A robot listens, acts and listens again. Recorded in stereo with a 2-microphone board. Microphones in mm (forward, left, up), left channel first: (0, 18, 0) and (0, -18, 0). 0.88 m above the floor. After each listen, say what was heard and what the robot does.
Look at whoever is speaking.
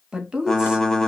The woman speaking: about 20° right or 160° right. Turn 20° right.
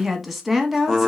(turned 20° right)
Facing the woman speaking.